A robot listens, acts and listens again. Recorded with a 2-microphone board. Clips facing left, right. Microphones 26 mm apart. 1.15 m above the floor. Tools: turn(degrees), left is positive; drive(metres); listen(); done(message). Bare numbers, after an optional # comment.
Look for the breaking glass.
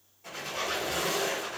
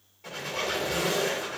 listen()
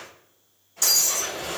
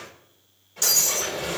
turn(-30)
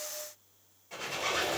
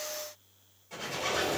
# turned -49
listen()
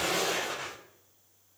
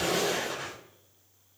done("I heard breaking glass, but can't make it out now. It was about 45° left or 125° right.")